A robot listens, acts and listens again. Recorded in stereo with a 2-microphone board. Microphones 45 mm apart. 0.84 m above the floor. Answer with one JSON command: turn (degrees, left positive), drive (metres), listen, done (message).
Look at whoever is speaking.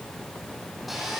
{"listen": true}
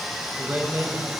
{"turn": -55}
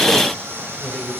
{"turn": 10}
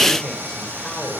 {"turn": 15}
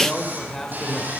{"turn": 10}
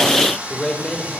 {"done": "Facing the man speaking, 2 to 4 m away."}